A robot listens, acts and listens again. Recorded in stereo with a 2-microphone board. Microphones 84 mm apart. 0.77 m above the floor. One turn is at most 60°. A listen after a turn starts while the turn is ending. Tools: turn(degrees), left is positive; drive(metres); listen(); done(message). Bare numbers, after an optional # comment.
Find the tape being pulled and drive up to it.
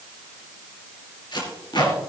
# The tape being pulled: about 60° left or 120° left.
turn(60)
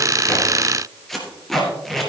drive(1.0)
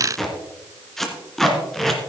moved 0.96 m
drive(1.0)
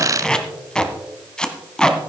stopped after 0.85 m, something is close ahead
# The tape being pulled is now 10° left.
turn(10)
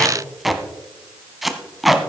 done("I am next to the tape being pulled.")